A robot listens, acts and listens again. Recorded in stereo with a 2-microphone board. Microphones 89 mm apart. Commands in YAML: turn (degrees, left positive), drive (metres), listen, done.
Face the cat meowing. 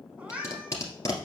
turn: -30
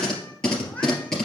listen: true
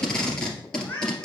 turn: 20
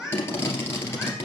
done: "Facing the cat meowing, 2 to 4 m away."